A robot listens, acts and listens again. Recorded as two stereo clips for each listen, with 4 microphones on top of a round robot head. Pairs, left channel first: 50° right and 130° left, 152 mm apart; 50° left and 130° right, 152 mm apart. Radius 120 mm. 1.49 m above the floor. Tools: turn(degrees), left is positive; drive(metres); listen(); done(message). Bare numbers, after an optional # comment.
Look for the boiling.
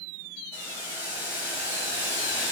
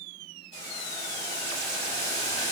# The boiling: 50° left.
turn(50)
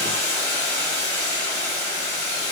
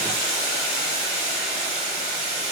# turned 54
done("Facing the boiling.")